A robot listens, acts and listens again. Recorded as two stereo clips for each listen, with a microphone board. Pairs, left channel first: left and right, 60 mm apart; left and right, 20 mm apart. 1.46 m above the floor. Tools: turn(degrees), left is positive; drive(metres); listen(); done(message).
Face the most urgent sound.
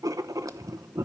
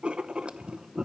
listen()
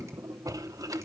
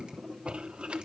listen()
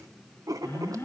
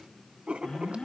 turn(degrees=50)
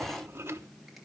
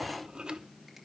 listen()
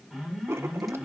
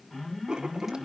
done("Facing the alarm.")